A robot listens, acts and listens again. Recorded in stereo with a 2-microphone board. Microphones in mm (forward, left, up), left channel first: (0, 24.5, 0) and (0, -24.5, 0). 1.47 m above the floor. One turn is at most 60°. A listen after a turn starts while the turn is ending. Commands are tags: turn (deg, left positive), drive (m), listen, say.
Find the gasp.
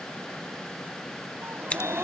<turn deg="-50"/>
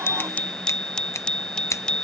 <listen/>
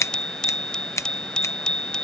<say>I heard a gasp, but can't make it out now. It was about straight ahead or 80° right.</say>